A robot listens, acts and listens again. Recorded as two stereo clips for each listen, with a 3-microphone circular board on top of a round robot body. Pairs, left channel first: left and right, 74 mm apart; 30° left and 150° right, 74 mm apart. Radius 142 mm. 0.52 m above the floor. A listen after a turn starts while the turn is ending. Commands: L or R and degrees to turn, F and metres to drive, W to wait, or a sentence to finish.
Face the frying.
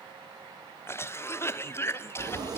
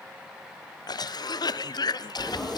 R60
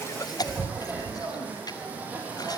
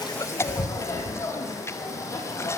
R20
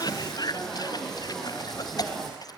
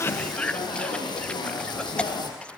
Found it: frying, straight ahead, over 4 m away.